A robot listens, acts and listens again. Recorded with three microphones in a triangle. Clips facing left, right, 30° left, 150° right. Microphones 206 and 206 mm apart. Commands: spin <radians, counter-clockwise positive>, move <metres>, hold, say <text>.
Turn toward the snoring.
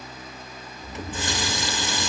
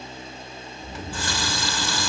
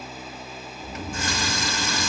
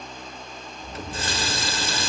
spin -1.40
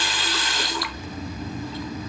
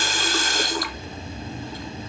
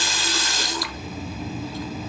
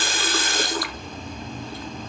spin -0.17
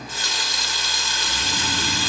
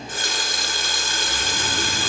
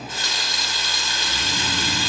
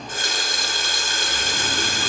hold
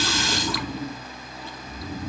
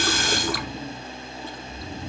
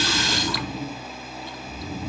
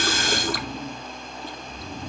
say Facing the snoring, 2 to 4 m away.